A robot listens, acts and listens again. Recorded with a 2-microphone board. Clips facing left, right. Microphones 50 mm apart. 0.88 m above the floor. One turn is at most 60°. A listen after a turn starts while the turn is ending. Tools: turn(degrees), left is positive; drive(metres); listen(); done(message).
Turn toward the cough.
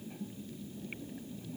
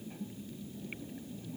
listen()
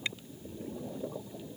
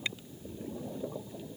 listen()
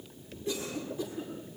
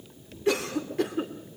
turn(degrees=-60)
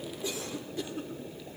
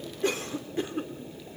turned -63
turn(degrees=-40)
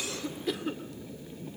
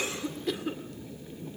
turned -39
done("Facing the cough.")